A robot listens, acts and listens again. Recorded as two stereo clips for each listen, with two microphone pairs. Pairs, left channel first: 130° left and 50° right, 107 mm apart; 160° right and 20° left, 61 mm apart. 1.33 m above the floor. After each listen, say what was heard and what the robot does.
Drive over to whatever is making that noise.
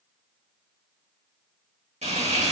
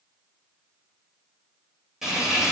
The frying: 65° right. Turn 65° right.
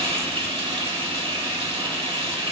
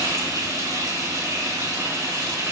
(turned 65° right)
The frying is now 15° right. Turn 15° right.
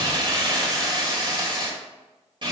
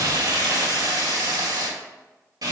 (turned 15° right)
Drive 1.0 m forward.
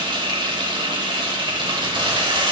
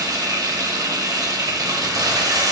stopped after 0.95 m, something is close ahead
I am next to the frying.